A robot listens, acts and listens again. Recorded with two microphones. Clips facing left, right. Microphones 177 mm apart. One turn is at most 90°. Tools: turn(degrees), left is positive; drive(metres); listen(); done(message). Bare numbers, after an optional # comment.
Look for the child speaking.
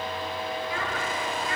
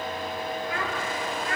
# The child speaking: about 65° right or 115° right.
turn(-65)
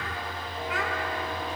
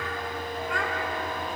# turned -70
done("Facing the child speaking.")